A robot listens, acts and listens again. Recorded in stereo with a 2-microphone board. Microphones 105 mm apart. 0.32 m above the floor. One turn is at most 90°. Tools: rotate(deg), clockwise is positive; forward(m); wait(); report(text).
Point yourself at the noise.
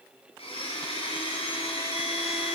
rotate(-70)
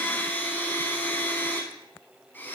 rotate(-20)
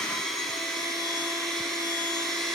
report("Facing the blender.")